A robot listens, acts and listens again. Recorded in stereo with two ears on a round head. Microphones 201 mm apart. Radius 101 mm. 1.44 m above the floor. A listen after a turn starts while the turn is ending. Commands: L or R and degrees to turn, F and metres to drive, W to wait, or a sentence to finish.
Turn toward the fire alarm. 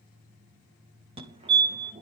R25
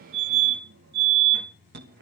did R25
R125
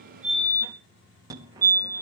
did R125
R20
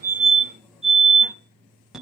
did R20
Facing the fire alarm, 2 to 4 m away.